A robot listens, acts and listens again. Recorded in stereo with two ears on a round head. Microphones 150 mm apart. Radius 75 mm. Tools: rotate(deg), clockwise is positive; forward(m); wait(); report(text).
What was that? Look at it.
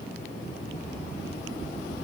wait()
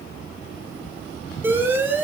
rotate(30)
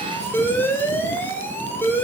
rotate(-15)
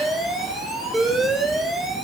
report("Facing the alarm, 2 to 4 m away.")